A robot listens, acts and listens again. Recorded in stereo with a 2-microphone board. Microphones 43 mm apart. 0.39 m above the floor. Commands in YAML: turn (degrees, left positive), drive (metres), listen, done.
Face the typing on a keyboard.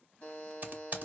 turn: -45
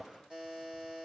listen: true
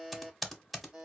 done: "Found it: typing on a keyboard, straight ahead."